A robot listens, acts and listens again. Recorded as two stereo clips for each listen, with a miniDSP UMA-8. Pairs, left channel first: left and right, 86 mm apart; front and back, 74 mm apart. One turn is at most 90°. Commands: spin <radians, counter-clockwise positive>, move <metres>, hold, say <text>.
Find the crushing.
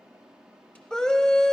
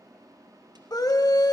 hold
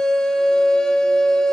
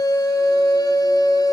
hold
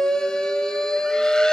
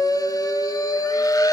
say I can't make out crushing, only a scream.